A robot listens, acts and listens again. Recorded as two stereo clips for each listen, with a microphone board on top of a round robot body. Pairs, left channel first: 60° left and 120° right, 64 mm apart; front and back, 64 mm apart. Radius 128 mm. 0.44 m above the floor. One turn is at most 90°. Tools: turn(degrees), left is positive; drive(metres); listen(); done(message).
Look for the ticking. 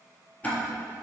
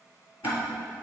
done("Facing the ticking.")